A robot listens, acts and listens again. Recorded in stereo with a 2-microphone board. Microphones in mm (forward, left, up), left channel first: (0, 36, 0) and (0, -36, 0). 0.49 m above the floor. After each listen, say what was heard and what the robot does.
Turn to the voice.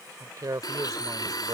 The man speaking: about 60° right or 120° right. Turn 60° right.
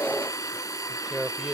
So it is at 15° right. Turn 15° right.
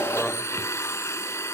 Keep listening.
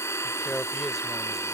Found it: a man speaking, straight ahead.